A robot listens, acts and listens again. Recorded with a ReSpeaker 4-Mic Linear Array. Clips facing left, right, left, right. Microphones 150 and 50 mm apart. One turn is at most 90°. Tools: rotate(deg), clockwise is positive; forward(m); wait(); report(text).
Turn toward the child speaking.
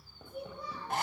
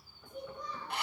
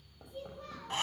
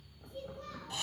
rotate(-30)
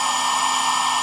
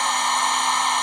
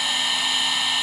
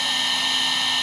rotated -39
wait()
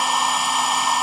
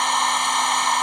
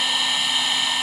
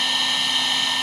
wait()
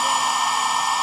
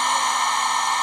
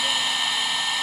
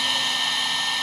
report("I heard a child speaking, but can't make it out now. It was about 35° right or 135° left.")